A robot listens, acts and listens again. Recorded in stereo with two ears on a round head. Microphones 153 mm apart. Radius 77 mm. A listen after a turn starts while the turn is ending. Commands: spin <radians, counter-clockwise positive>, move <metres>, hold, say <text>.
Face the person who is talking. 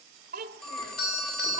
spin -1.05
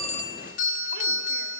hold
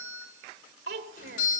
spin -1.05
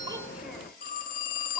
hold
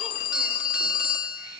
hold
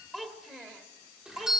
say Found it: a child speaking, straight ahead.